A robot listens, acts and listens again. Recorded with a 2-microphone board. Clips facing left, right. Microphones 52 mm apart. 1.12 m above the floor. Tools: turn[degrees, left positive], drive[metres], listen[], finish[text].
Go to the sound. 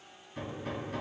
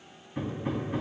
Thought: The hammering: about 20° right or 160° right.
Action: turn[-20]
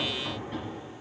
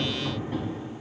Action: drive[1.0]
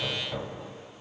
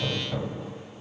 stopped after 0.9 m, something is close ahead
Action: finish[Arrived at the hammering, straight ahead.]